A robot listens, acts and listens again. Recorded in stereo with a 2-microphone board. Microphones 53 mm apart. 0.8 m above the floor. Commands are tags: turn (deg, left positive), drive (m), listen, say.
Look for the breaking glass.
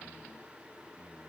<listen/>
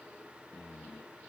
<listen/>
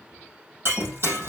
<turn deg="-50"/>
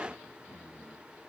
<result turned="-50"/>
<listen/>
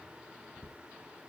<say>I heard breaking glass, but can't make it out now. It was about straight ahead or 80° right.</say>